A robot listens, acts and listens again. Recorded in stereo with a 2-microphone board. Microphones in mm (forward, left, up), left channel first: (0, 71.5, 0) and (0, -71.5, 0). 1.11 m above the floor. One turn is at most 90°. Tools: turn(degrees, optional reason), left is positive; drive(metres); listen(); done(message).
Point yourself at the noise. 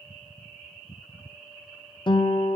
turn(degrees=35, reason="The guitar: about 35° left or 145° left.")
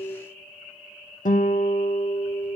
turn(degrees=90, reason="So it is at 110° left.")
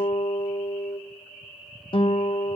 turn(degrees=40, reason="The guitar is now 40° left.")
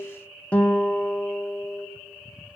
turn(degrees=10, reason="The guitar is now 10° left.")
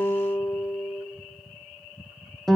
done("Found it: a guitar, straight ahead, under 1 m away.")